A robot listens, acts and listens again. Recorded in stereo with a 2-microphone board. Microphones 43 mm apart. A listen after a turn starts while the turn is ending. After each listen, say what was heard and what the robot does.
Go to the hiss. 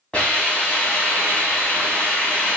The hiss: about 25° left or 155° left. Turn 25° left.
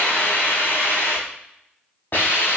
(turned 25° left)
So it is at 130° left. Turn 130° left.
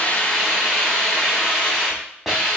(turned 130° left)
Drive 1.0 m forward.
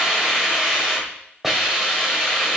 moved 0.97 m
Drive 1.0 m forward.
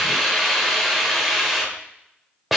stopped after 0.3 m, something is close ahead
I am next to the hiss.